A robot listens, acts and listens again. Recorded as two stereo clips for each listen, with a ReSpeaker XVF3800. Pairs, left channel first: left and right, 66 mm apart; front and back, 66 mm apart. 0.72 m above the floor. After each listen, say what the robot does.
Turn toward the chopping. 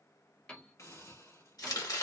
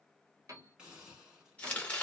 Turn 70° left.
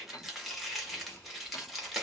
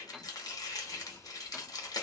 Found it: chopping, straight ahead.